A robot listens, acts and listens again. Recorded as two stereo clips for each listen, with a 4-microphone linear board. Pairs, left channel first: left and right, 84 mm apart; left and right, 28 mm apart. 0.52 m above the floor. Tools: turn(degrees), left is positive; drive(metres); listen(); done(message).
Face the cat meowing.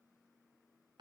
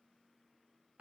listen()
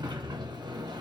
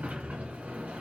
listen()
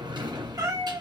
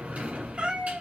turn(degrees=-45)
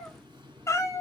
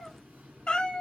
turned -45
turn(degrees=40)
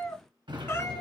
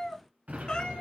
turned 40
turn(degrees=30)
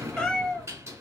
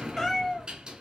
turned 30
turn(degrees=15)
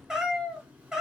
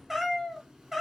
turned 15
done("Facing the cat meowing, 1 to 2 m away.")